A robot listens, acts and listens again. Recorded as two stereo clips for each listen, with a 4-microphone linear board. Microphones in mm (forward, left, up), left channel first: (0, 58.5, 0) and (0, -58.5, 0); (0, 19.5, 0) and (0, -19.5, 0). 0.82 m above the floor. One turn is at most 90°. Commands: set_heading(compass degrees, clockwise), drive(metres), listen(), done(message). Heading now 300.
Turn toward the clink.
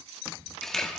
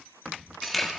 listen()
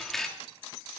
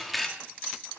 listen()
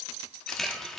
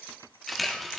done("I can't make out a clink, only a camera shutter.")